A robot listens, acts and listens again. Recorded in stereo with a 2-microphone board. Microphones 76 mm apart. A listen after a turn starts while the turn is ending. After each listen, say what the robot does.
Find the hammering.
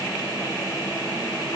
Keep listening.
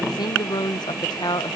Keep listening.
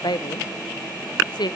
I can't make out hammering to turn to.